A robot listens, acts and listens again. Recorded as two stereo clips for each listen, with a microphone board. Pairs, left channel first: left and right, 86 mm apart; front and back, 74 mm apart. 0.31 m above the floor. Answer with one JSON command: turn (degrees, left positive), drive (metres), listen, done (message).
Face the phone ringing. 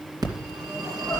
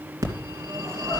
{"turn": -135}
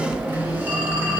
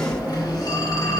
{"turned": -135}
{"turn": -25}
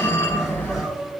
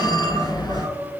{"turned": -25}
{"turn": 20}
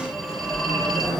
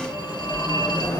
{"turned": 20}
{"done": "Facing the phone ringing, 2 to 4 m away."}